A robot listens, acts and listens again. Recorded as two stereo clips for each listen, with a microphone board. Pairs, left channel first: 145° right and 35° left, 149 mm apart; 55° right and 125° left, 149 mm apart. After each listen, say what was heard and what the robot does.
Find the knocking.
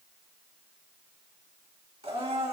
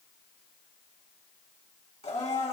Keep listening.
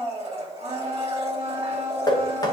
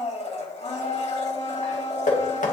The knocking: 80° right. Turn 80° right.
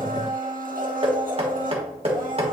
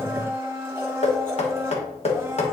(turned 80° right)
The knocking is now 15° right. Turn 15° right.
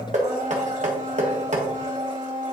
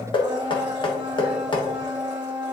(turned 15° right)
Found it: knocking, straight ahead, 1 to 2 m away.